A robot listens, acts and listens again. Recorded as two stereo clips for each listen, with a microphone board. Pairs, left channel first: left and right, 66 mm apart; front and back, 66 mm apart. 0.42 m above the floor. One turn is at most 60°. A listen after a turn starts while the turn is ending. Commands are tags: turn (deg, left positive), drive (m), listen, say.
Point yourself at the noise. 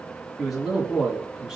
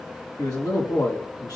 <turn deg="-10"/>
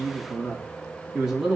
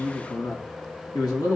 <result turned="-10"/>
<turn deg="-10"/>
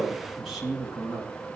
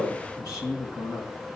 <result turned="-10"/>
<turn deg="-10"/>
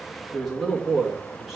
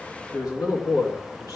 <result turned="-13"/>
<say>Facing the man speaking, 2 to 4 m away.</say>